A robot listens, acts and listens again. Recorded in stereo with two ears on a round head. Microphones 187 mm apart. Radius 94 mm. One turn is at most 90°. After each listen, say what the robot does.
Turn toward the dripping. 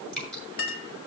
Turn 30° left.
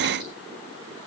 Keep listening.
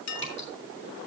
Keep listening.
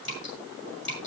Turn 90° left.
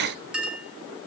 Turn 55° left.
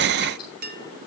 Keep listening.
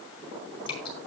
Turn 20° left.
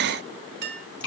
Found it: dripping, straight ahead.